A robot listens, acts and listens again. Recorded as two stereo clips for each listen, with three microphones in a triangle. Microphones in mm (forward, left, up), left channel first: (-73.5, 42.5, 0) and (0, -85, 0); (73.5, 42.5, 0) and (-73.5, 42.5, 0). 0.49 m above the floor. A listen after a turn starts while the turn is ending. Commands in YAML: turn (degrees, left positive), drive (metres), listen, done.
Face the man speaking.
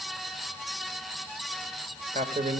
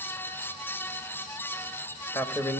turn: -75
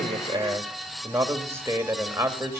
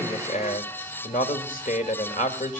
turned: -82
turn: 10
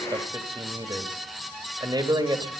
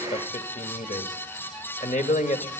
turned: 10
done: "Facing the man speaking."